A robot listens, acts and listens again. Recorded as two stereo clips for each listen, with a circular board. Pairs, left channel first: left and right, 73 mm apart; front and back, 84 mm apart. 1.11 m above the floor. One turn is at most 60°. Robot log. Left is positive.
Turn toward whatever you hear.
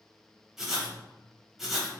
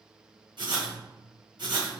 note: The writing: 175° right.
cmd yaw -60
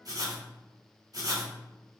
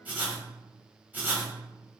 note: The writing is now 110° right.
cmd yaw -60
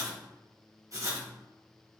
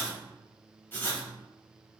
note: The writing is now 60° right.
cmd yaw -60
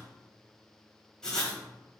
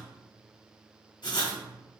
note: The writing is now 10° left.
cmd yaw +10
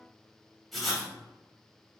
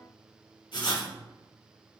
end: Found it: writing, straight ahead, 1 to 2 m away.